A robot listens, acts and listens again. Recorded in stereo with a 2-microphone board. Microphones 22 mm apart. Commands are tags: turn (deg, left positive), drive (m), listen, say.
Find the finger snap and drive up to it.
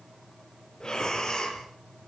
<listen/>
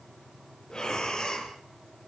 <listen/>
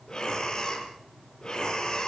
<say>I can't make out a finger snap to turn to.</say>